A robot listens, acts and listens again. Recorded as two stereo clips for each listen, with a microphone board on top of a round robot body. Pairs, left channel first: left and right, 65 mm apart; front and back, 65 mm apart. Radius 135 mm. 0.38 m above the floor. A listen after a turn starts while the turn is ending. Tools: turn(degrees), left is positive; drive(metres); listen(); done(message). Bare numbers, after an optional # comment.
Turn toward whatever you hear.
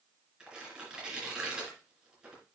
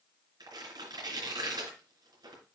# The tearing paper: 170° right.
turn(-170)
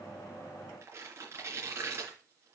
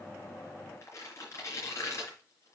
# The tearing paper is now 45° right.
turn(-45)
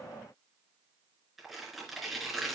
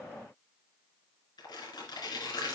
done("Facing the tearing paper.")